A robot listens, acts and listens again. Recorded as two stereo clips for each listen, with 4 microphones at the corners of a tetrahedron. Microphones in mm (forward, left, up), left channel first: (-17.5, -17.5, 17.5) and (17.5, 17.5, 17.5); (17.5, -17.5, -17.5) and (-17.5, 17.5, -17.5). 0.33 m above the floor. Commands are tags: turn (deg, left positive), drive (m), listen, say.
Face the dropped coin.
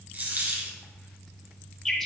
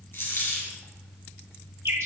<say>Found it: a dropped coin, straight ahead, 1 to 2 m away.</say>